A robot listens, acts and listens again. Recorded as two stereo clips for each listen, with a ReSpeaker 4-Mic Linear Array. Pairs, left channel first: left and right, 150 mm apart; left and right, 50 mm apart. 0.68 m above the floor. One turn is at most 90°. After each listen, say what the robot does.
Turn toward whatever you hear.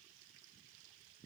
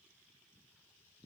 Keep listening.
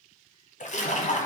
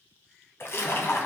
Turn 55° left.
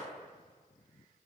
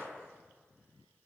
Keep listening.
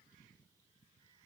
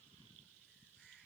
I heard a splash, but can't make it out now. It was about straight ahead or 70° left.